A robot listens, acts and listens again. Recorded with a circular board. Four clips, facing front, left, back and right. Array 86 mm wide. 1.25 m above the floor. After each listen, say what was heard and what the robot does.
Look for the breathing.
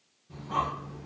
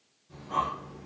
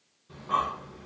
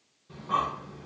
The breathing: 135° right. Turn 135° right.
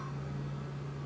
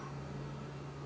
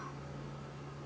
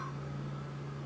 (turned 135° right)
The breathing is now 35° right. Turn 35° right.
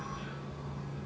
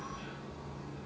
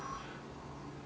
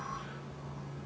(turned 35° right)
Facing the breathing, 1 to 2 m away.